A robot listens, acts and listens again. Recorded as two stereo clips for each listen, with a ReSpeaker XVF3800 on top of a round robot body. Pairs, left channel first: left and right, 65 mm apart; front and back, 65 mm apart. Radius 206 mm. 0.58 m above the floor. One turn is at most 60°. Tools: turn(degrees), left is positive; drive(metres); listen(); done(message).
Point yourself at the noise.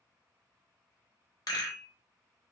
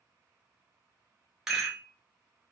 turn(degrees=60)
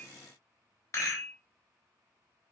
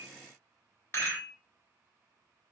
turn(degrees=50)
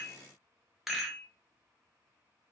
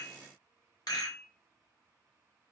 done("Found it: a rattle, straight ahead, 1 to 2 m away.")